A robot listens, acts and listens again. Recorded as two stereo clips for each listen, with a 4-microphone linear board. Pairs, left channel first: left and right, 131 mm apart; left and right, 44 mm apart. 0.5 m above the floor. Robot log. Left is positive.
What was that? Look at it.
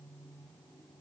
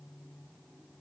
cmd idle
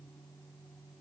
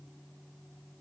cmd idle
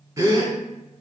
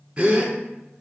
note: The gasp: about 25° right or 155° right.
cmd yaw -25
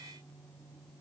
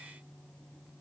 cmd idle
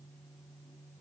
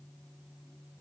end: I heard a gasp, but can't make it out now. It was about straight ahead or 130° right.